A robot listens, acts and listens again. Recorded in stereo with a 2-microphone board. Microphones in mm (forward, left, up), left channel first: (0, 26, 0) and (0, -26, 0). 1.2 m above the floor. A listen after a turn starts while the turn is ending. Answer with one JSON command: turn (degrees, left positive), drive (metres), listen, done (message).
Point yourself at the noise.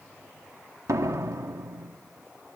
{"turn": -90}
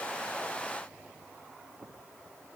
{"done": "I heard a door slam from this way, but can't make it out now."}